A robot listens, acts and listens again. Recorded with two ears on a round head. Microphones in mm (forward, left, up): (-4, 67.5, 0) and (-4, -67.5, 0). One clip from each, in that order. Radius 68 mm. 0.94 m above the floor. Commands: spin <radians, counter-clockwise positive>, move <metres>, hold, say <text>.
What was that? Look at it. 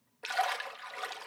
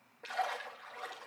spin 0.96
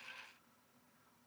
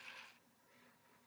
hold
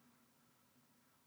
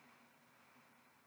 say I heard a splash, but can't make it out now. It was about straight ahead or 70° left.